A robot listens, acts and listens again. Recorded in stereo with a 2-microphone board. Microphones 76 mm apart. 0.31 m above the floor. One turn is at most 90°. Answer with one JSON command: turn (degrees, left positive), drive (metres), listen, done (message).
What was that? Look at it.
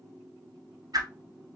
{"turn": -60}
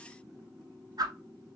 {"turn": -65}
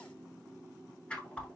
{"turn": 15}
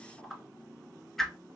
{"done": "Found it: a whoosh, straight ahead."}